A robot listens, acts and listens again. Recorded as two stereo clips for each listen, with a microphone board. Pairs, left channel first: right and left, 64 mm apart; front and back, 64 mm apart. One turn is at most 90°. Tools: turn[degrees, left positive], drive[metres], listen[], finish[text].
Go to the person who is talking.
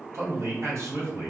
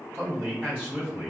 Thought: The man speaking: 125° left.
Action: turn[90]
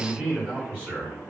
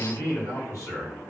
Thought: The man speaking is now 30° left.
Action: turn[30]
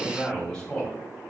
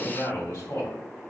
Thought: The man speaking is now 10° right.
Action: turn[-10]
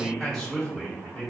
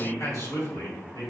Action: drive[1.0]
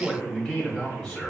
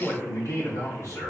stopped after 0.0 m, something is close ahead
Action: finish[Something is in my way. I am facing the man speaking but have not reached it.]